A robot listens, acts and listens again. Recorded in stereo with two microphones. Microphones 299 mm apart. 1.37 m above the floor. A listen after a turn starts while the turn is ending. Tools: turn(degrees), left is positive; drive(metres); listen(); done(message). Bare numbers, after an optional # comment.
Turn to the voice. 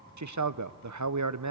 # The man speaking: about 70° right or 110° right.
turn(-70)
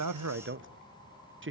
# So it is at 40° right.
turn(-40)
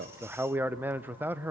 done("Found it: a man speaking, straight ahead.")